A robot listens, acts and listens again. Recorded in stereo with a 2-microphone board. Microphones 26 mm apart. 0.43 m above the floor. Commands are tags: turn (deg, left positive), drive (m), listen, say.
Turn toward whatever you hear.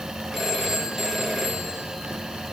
<turn deg="-30"/>
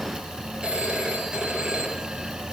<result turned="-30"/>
<turn deg="-140"/>
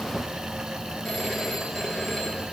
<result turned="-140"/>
<say>Found it: a phone ringing, straight ahead.</say>